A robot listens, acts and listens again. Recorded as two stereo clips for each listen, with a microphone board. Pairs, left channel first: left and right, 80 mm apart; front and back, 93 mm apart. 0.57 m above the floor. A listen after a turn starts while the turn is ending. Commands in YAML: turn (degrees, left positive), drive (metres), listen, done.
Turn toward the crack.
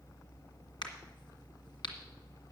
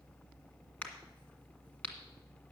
turn: 75
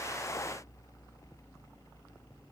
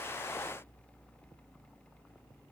done: "I heard a crack from this way, but can't make it out now."